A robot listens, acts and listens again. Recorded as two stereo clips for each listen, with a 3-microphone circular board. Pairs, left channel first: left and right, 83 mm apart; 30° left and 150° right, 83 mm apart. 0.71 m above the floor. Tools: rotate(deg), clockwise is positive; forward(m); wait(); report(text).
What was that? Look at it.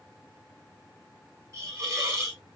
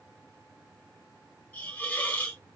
rotate(45)
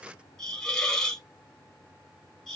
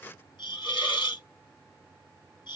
report("Found it: a hiss, straight ahead, 1 to 2 m away.")